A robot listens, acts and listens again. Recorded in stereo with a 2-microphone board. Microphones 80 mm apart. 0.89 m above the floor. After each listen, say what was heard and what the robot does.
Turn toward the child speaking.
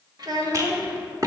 The child speaking: about 55° right or 125° right. Turn 55° right.
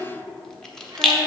So it is at 65° right. Turn 65° right.
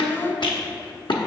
The child speaking is now 10° left. Turn 10° left.
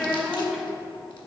Found it: a child speaking, straight ahead.